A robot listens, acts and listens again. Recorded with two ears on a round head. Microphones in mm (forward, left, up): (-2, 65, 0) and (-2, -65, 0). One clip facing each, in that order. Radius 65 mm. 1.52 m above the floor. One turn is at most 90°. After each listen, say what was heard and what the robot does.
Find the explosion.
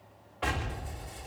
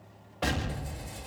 The explosion: about 50° right or 130° right. Turn 50° right.
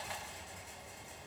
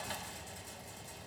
Keep listening.
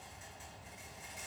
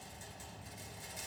I heard an explosion, but can't make it out now. It was about straight ahead or 80° right.